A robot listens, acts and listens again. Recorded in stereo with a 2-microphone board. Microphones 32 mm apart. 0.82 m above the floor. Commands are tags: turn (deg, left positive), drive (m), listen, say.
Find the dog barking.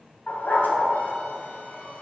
<turn deg="75"/>
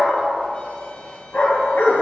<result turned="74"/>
<turn deg="60"/>
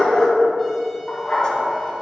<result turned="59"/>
<turn deg="20"/>
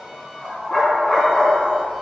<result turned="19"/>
<say>Found it: a dog barking, straight ahead, 2 to 4 m away.</say>